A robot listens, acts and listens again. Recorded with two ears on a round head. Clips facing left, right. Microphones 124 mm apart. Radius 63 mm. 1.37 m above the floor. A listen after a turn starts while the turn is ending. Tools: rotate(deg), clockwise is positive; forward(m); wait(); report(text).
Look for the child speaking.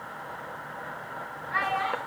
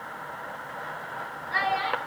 rotate(40)
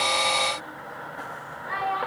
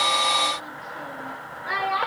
rotate(100)
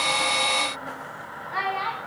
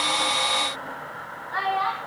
rotate(-15)
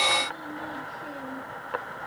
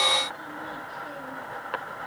wait()
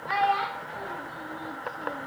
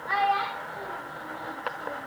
rotate(-10)
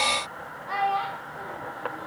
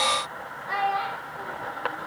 report("Facing the child speaking, 1 to 2 m away.")